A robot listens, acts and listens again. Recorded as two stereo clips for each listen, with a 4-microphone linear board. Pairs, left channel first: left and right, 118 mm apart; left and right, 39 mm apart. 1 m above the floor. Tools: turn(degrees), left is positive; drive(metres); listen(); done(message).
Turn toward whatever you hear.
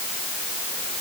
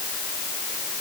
listen()
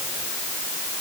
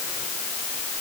listen()
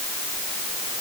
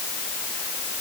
done("I can't make out anything to turn to.")